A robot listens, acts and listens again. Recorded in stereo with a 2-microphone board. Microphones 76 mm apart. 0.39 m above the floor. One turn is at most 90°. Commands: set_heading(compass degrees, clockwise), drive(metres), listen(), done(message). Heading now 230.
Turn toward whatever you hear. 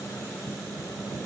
listen()
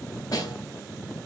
set_heading(170)
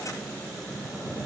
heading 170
listen()
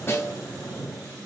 set_heading(135)
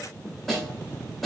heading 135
done("Found it: a snare drum, straight ahead, 1 to 2 m away.")